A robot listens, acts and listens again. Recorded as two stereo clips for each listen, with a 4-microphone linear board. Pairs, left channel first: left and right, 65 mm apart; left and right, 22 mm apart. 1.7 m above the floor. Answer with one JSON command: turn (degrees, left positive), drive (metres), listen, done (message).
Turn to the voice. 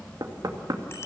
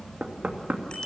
{"listen": true}
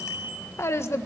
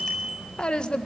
{"turn": 40}
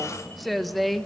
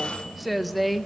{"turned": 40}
{"done": "Found it: a woman speaking, straight ahead."}